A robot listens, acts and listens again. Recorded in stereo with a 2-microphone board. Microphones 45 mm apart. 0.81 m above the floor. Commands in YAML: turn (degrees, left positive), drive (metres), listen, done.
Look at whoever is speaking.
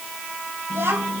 turn: -60
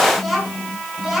done: "Facing the child speaking, over 4 m away."